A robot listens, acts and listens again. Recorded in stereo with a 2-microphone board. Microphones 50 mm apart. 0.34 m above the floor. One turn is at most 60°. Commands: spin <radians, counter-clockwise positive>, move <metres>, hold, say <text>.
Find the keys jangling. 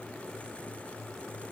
hold
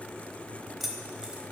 spin -0.52
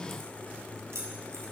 spin -1.05
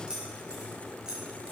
spin -0.26
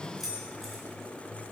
say Facing the keys jangling.